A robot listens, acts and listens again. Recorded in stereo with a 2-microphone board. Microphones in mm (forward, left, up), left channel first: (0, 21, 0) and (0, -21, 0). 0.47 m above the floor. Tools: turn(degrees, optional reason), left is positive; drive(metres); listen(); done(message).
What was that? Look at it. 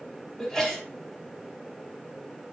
turn(degrees=30)
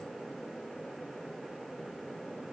listen()
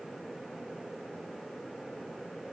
done("I heard a sneeze, but can't make it out now. It was about 20° right or 140° left.")